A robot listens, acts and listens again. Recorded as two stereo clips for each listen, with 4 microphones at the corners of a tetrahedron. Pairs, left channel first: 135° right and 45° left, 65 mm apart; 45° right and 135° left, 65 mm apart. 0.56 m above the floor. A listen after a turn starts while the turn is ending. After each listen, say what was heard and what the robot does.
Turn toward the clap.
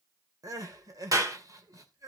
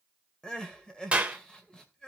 The clap: 65° left. Turn 65° left.
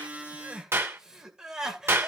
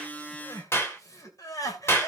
Facing the clap, 2 to 4 m away.